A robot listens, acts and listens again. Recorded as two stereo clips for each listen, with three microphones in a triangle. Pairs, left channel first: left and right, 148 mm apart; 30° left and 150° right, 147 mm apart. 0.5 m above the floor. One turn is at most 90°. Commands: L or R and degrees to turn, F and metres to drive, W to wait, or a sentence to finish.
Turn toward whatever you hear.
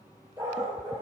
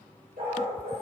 R90
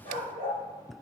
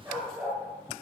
R80
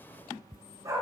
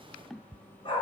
R25
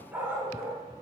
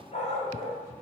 R20
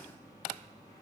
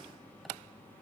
W
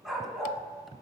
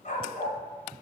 Found it: a dog barking, straight ahead, 1 to 2 m away.